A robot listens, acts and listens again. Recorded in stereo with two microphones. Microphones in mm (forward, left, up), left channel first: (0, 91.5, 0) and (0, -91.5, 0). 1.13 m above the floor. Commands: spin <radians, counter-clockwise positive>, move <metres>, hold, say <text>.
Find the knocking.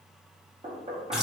spin -0.61
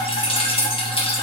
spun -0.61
hold
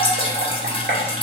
spin -1.83
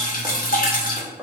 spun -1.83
spin -0.26
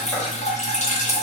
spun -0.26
hold
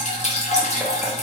hold
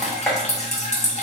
say Facing the knocking.